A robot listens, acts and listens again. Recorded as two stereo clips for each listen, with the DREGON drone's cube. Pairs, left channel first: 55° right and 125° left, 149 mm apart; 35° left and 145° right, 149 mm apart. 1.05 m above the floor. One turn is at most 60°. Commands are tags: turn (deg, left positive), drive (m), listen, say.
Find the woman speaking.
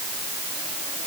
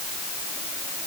<listen/>
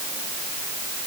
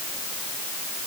<listen/>
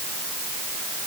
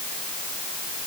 <say>I can't make out a woman speaking.</say>